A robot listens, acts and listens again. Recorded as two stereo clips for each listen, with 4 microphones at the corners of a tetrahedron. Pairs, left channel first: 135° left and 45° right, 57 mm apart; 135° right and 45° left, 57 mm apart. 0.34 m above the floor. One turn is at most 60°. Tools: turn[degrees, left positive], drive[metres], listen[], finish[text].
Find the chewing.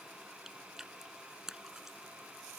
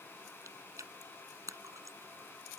Thought: The chewing: 35° left.
Action: turn[35]
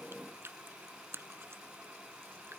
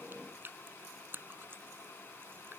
Action: finish[Found it: chewing, straight ahead.]